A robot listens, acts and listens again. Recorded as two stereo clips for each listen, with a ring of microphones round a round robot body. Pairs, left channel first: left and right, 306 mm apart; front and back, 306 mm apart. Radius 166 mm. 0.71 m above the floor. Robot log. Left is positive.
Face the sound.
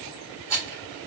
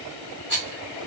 note: The rattle: 55° right.
cmd yaw -55
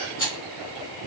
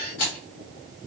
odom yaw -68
note: The rattle is now 10° left.
cmd yaw +10
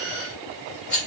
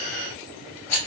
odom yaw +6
end: Facing the rattle, 1 to 2 m away.